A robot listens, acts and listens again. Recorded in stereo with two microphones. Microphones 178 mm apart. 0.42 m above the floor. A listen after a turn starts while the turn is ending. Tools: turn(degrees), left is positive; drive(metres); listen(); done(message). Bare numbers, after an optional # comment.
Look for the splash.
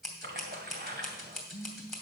# The splash: about 65° right or 115° right.
turn(-65)
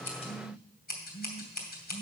listen()
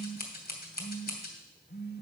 done("I heard a splash, but can't make it out now. It was about straight ahead or 50° right.")